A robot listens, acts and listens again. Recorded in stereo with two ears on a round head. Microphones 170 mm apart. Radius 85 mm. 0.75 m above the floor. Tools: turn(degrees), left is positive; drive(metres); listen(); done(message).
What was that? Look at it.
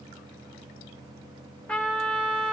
turn(degrees=30)
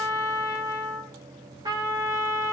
turn(degrees=-20)
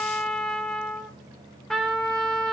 done("Facing the trumpet, 2 to 4 m away.")